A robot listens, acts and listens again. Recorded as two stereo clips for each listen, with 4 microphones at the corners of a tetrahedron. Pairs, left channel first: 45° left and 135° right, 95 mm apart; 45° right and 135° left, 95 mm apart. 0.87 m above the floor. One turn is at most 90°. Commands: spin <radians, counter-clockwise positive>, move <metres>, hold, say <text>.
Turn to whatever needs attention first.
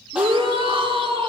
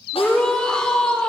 spin -1.57
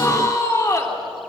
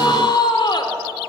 spin -0.17
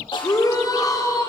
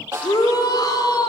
say Found it: a shout, straight ahead.